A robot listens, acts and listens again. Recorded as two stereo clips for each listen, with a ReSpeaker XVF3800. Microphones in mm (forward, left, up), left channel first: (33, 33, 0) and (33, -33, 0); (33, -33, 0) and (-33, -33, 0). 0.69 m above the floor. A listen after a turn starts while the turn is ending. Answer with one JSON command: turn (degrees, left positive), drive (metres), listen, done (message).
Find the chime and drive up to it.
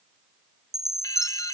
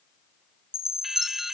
{"turn": -175}
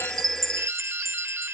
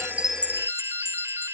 {"turn": -55}
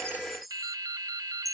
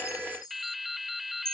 {"drive": 1.0}
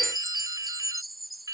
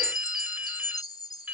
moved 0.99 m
{"drive": 1.0}
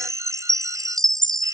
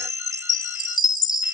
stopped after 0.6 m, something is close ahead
{"done": "I am next to the chime."}